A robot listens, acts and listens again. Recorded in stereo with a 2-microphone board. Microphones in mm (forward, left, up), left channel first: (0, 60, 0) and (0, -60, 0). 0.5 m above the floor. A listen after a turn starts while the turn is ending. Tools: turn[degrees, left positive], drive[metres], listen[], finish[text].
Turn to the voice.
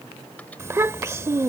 Thought: The child speaking: about 25° right or 155° right.
Action: turn[-25]
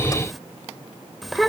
Action: finish[Found it: a child speaking, straight ahead.]